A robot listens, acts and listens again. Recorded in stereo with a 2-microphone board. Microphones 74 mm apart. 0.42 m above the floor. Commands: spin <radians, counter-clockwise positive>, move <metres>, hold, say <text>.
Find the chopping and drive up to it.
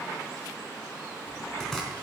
spin 0.52
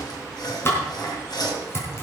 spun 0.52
spin 2.53
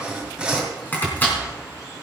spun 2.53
spin 0.44
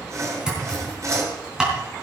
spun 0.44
spin -0.17
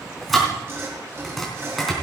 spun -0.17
move 1.0
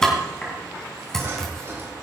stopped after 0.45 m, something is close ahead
spin 0.17
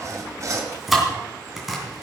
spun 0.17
say Something is in my way. I am facing the chopping but have not reached it.